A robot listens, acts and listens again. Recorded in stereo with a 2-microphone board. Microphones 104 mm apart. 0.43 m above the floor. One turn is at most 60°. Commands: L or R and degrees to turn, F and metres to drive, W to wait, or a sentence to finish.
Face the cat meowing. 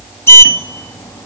W
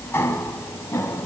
W
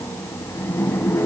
I can't make out a cat meowing to turn to.